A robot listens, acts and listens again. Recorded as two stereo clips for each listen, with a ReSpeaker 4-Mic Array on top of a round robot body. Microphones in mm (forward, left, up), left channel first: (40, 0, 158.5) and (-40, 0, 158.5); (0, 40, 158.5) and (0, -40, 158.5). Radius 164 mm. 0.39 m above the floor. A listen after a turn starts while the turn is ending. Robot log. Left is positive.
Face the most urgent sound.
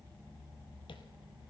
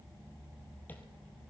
cmd idle
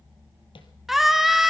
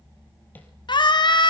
note: The scream: 95° left.
cmd yaw +95
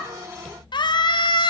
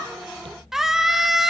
end: Found it: a scream, straight ahead.